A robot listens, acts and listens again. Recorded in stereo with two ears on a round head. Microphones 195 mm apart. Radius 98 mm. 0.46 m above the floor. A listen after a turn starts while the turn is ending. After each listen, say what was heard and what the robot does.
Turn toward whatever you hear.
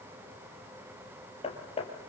The hammering: about 30° left or 150° left. Turn 30° left.
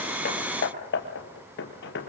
So it is at 125° left. Turn 125° left.
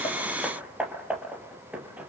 Facing the hammering, 2 to 4 m away.